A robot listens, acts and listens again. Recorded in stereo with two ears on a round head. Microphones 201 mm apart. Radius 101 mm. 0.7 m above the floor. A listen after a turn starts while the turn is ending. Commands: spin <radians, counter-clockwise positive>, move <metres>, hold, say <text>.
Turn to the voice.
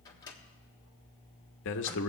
spin 0.96
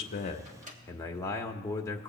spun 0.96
spin 0.26
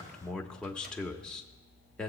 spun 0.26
say Found it: a man speaking, straight ahead.